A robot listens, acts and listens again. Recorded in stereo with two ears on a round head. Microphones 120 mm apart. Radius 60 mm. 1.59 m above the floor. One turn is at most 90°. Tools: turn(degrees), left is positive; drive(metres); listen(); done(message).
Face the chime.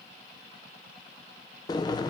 listen()
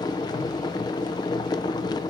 listen()
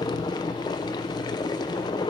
done("I can't make out a chime to turn to.")